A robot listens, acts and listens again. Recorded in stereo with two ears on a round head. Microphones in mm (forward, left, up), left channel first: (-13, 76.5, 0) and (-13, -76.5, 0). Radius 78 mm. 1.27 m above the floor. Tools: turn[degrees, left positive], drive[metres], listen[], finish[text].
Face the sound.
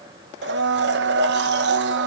Thought: The blender: about 70° right or 110° right.
Action: turn[-70]
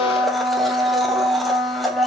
Action: finish[Facing the blender.]